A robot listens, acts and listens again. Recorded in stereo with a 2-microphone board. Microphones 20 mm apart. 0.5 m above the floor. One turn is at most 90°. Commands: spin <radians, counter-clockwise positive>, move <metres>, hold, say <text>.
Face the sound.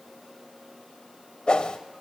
spin 0.87
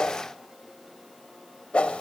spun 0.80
spin 1.40
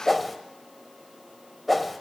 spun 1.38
say Found it: a whoosh, straight ahead.